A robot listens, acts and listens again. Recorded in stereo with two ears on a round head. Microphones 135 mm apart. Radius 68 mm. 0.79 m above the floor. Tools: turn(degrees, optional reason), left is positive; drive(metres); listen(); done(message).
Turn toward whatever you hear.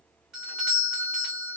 turn(degrees=-30)
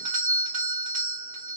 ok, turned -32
turn(degrees=-145, reason="So it is at 145° right.")
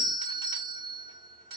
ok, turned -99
turn(degrees=-45, reason="The doorbell is now 45° right.")
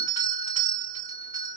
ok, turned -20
turn(degrees=-25, reason="The doorbell is now 25° right.")
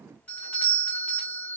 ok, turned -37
turn(degrees=10, reason="The doorbell is now 10° left.")
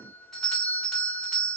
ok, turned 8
done("Facing the doorbell, 1 to 2 m away.")